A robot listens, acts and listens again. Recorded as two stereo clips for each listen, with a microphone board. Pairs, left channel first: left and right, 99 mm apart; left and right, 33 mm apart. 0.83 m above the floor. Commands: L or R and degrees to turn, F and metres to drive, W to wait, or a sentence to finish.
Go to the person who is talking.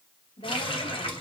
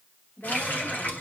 L90
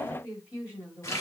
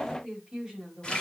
R10
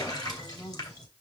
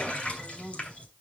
F1.0
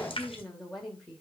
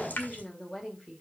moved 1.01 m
F1.0
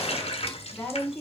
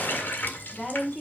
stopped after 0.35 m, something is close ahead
L10
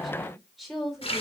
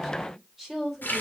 Something is in my way. I am facing the woman speaking but have not reached it.